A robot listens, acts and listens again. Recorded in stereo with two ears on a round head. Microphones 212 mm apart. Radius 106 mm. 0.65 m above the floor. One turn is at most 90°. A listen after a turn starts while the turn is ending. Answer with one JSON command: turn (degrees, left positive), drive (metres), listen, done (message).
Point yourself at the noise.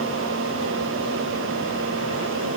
{"listen": true}
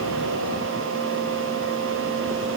{"listen": true}
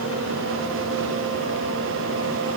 {"done": "I can't make out anything to turn to."}